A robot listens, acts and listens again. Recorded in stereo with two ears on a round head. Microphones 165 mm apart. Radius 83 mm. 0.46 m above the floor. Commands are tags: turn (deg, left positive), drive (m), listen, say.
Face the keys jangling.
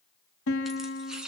<turn deg="-30"/>
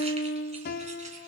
<listen/>
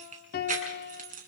<turn deg="-130"/>
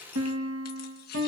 <listen/>
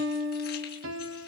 <listen/>
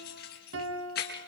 <turn deg="55"/>
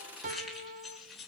<say>Found it: keys jangling, straight ahead, over 4 m away.</say>